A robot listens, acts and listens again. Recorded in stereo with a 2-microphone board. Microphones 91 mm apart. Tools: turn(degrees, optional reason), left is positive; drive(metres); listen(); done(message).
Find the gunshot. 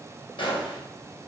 turn(degrees=65, reason="The gunshot: about 65° left or 115° left.")
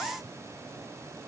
listen()
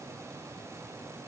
done("I heard a gunshot, but can't make it out now. It was about straight ahead or 50° left.")